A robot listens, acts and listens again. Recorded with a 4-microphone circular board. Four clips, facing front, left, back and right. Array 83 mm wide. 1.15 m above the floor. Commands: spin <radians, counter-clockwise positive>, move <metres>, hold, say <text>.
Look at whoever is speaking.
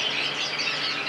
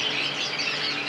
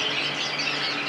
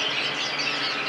hold
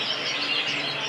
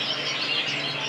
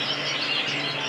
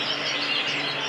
hold
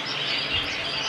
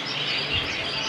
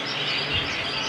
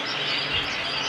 spin 2.62
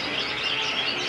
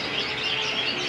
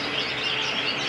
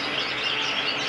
hold
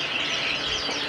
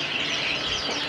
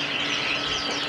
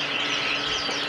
spin 0.96
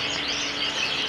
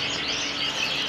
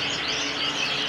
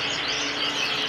spin 0.26
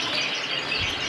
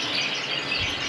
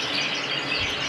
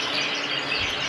say Found it: a child speaking, straight ahead.